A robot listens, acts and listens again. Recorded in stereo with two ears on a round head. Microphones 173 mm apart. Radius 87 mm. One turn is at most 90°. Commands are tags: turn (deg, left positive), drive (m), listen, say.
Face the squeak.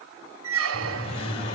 <turn deg="-90"/>
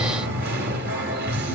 <listen/>
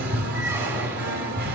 <listen/>
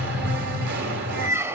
<turn deg="-10"/>
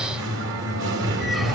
<listen/>
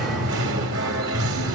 <listen/>
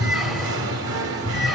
<say>I heard a squeak from this way, but can't make it out now.</say>